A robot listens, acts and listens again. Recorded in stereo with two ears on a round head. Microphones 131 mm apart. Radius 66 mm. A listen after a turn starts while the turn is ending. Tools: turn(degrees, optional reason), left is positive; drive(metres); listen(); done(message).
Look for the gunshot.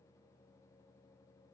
listen()
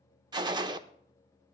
turn(degrees=-30, reason="The gunshot: about 30° right or 150° right.")
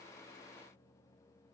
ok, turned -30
listen()
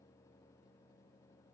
done("I heard a gunshot, but can't make it out now. It was about straight ahead or 120° right.")